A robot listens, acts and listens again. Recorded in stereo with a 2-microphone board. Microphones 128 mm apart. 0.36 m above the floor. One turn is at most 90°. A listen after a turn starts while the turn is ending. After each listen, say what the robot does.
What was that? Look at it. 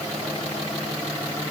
Keep listening.
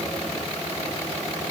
Keep listening.
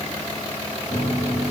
Turn 65° left.
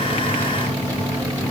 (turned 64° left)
Turn 15° left.
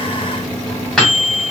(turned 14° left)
Facing the microwave.